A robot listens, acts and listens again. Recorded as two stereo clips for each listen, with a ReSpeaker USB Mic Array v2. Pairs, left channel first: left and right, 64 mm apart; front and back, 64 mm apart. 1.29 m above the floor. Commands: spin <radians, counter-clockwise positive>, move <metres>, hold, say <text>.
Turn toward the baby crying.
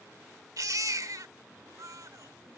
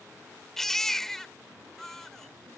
spin -1.48
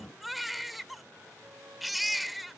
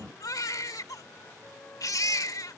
say Facing the baby crying.